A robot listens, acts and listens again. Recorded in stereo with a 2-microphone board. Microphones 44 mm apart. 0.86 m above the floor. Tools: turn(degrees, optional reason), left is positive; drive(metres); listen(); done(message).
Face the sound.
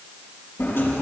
turn(degrees=60, reason="The sliding door: about 60° left or 120° left.")
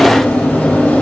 turn(degrees=65, reason="So it is at 65° left.")
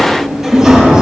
done("Found it: a sliding door, straight ahead, over 4 m away.")